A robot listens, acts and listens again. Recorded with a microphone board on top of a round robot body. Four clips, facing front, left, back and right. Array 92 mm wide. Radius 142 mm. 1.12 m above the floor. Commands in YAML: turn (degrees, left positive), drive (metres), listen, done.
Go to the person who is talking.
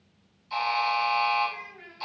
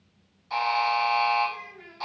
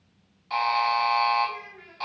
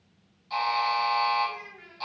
turn: -155
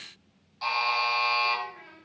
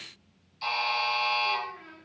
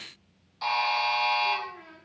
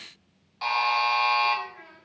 turn: -45
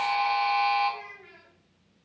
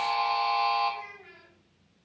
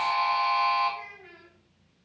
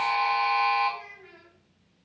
turn: -20
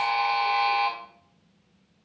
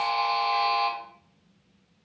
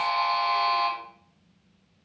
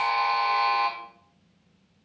listen: true
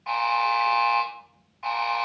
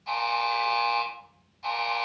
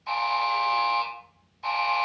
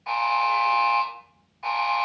listen: true
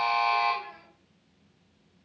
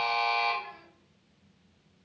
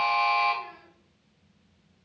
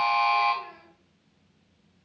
done: "I heard a child speaking from this way, but can't make it out now. I did not reach it."